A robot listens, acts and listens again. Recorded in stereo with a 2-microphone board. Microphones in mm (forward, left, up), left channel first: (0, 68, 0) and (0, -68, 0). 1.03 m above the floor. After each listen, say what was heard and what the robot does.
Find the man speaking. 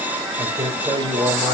The man speaking: about 35° right or 145° right. Turn 35° right.
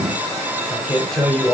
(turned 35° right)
Facing the man speaking.